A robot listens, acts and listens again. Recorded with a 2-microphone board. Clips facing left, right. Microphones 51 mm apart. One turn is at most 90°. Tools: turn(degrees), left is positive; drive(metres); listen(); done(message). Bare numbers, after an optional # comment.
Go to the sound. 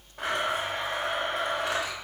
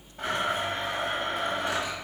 turn(90)
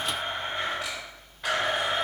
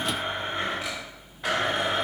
drive(1.0)
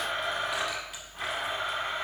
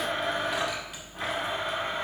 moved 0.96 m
drive(1.0)
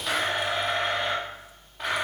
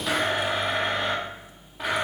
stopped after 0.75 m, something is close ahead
done("Arrived at the blender, straight ahead.")